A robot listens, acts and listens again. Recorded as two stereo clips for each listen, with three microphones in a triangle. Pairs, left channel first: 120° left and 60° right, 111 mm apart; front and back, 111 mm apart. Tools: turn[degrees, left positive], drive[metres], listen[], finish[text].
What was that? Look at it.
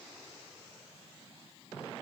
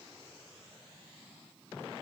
Action: listen[]
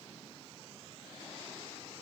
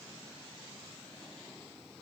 Action: listen[]
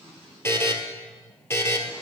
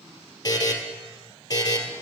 Thought: The buzzer: 50° left.
Action: turn[50]
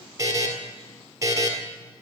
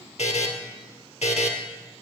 Action: finish[Found it: a buzzer, straight ahead.]